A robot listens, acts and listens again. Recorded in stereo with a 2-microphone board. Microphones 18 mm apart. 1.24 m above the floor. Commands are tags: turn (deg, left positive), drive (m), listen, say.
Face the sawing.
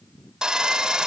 <turn deg="-45"/>
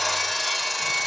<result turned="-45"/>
<say>Facing the sawing.</say>